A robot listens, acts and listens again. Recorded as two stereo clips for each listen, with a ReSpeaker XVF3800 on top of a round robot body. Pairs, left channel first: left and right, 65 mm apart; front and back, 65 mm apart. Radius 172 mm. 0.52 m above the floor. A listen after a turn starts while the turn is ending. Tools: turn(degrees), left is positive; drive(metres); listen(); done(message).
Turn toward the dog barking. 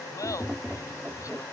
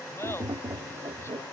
listen()
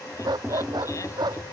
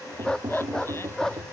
turn(degrees=-80)
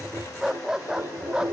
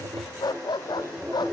turn(degrees=-10)
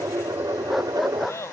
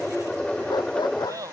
done("Found it: a dog barking, straight ahead.")